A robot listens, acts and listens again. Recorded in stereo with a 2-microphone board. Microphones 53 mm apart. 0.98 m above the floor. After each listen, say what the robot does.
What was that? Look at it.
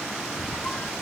Turn 40° left.
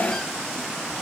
Keep listening.
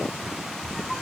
Facing the squeak, under 1 m away.